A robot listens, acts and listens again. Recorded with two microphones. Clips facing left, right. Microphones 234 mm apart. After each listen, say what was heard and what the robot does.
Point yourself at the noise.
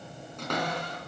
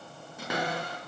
Turn 30° right.
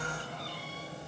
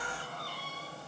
Keep listening.
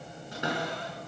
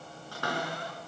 So it is at 20° left. Turn 20° left.
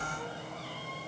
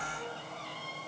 Keep listening.
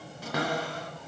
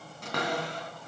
Facing the cupboard door, 2 to 4 m away.